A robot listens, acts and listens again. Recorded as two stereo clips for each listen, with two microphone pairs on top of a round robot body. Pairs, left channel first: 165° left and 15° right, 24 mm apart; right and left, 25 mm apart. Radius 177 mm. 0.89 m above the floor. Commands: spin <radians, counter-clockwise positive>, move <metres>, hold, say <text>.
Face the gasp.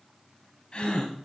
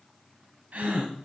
spin 2.09
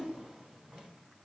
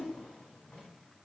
say Facing where the gasp came from. I can't hear it now.